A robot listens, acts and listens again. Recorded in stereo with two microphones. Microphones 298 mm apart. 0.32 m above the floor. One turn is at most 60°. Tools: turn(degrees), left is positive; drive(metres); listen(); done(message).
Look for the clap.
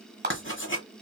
turn(degrees=-35)
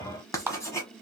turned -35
turn(degrees=-10)
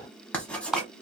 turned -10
done("Facing the clap.")